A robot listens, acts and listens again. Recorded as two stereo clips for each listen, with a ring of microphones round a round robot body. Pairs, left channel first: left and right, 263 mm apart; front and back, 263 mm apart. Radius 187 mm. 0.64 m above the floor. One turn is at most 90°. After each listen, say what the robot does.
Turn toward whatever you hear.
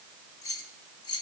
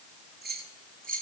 Turn 90° left.
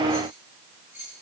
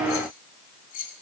Facing the keys jangling.